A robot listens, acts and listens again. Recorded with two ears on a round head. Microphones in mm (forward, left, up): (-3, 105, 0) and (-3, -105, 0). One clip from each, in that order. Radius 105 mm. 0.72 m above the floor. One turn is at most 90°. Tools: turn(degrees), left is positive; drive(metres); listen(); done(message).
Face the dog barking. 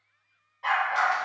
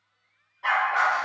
turn(degrees=30)
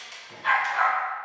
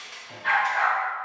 turn(degrees=90)
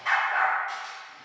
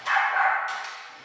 turn(degrees=60)
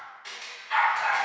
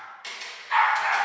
done("Found it: a dog barking, straight ahead, 2 to 4 m away.")